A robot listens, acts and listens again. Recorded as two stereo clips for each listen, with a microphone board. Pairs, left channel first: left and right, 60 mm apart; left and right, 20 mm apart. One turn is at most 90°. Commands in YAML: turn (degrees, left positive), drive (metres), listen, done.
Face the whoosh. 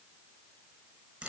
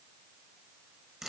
listen: true
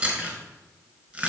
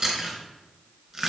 listen: true
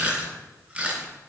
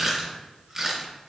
done: "I can't make out a whoosh to turn to."